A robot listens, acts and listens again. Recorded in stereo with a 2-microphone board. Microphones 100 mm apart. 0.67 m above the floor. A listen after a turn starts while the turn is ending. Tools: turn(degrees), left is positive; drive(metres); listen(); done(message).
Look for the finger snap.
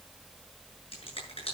turn(degrees=65)
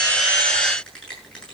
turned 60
turn(degrees=10)
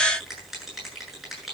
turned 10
done("Found it: a finger snap, straight ahead, over 4 m away.")